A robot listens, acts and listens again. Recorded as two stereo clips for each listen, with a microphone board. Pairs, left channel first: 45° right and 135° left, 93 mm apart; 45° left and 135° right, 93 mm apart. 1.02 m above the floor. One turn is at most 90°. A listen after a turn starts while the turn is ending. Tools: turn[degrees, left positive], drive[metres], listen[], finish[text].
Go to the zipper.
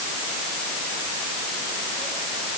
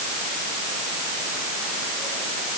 Action: listen[]
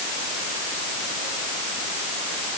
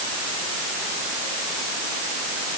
Action: listen[]
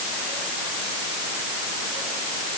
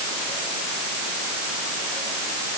Action: finish[I can't make out a zipper to turn to.]